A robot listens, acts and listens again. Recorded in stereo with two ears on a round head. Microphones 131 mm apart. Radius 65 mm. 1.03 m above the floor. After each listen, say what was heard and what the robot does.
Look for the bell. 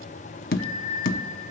Turn 30° left.
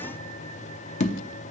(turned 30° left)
Keep listening.
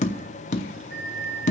So it is at 35° right. Turn 35° right.
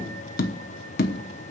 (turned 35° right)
Keep listening.
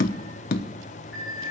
The bell is now 10° right. Turn 10° right.
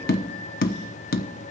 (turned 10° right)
Keep listening.
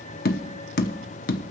Keep listening.
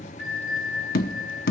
Facing the bell, 2 to 4 m away.